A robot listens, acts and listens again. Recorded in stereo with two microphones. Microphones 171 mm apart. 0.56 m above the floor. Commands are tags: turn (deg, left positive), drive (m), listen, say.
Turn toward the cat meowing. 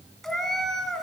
<turn deg="30"/>
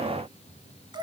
<turn deg="-30"/>
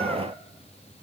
<listen/>
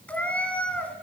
<turn deg="10"/>
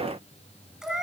<say>Found it: a cat meowing, straight ahead, 1 to 2 m away.</say>